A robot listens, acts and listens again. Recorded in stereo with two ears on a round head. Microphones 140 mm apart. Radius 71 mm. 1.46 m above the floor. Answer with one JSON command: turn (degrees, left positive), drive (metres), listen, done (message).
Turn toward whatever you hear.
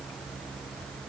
{"listen": true}
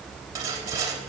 {"turn": -25}
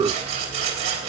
{"turn": -130}
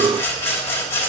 {"turn": 15}
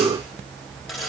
{"done": "Found it: sawing, straight ahead."}